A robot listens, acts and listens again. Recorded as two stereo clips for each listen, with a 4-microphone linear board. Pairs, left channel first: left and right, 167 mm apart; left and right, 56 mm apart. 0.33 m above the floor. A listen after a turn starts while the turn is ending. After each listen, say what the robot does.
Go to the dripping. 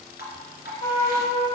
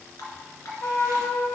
Turn 90° left.
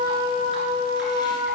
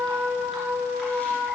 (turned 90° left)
Keep listening.
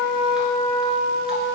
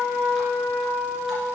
Keep listening.
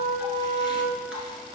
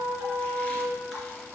I heard dripping from this way, but can't make it out now. I did not reach it.